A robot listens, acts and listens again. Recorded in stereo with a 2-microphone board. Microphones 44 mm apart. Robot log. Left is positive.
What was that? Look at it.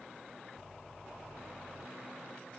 cmd idle
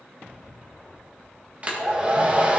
note: The hair dryer: about 30° right or 150° right.
cmd yaw -30
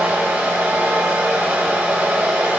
note: So it is at 120° right.
cmd yaw -120
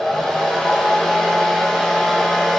note: The hair dryer is now 10° left.
cmd yaw +10
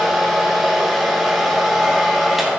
end: Facing the hair dryer.